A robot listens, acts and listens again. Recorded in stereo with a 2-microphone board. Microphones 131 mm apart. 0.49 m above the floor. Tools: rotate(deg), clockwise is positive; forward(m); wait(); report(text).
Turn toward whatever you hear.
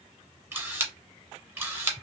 rotate(20)
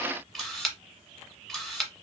report("Found it: a camera shutter, straight ahead.")